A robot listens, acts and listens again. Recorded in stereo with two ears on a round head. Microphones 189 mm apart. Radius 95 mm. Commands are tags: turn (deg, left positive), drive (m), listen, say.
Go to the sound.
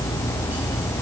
<listen/>
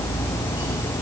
<listen/>
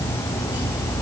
<say>I can't make out anything to turn to.</say>